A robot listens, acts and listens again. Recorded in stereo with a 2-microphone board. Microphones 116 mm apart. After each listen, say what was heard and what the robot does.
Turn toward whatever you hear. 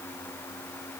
Keep listening.
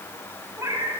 The cat meowing: about 30° right or 150° right. Turn 30° right.
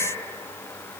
Keep listening.
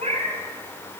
So it is at 105° right. Turn 105° right.
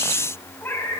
The cat meowing is now 20° left. Turn 20° left.
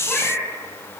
Found it: a cat meowing, straight ahead, 2 to 4 m away.